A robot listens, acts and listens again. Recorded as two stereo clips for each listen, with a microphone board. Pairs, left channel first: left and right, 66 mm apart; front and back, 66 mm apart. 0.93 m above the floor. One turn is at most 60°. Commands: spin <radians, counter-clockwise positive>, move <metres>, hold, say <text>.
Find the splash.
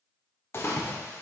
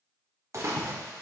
spin 1.05
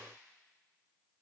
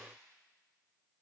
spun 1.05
spin 1.05
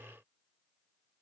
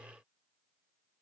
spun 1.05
spin 0.35
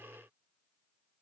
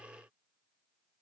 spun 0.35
say I heard a splash from this way, but can't make it out now.